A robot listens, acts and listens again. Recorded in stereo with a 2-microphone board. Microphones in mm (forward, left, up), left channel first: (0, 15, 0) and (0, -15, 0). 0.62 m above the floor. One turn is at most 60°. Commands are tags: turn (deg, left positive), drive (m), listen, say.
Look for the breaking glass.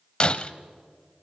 <turn deg="40"/>
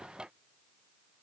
<listen/>
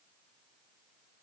<say>I heard breaking glass, but can't make it out now. It was about straight ahead or 100° left.</say>